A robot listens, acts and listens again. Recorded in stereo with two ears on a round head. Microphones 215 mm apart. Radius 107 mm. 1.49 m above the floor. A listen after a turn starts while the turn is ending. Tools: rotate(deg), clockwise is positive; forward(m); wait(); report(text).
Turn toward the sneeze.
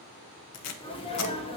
rotate(-25)
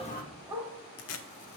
wait()
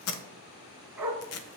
report("I heard a sneeze, but can't make it out now. It was about straight ahead or 130° left.")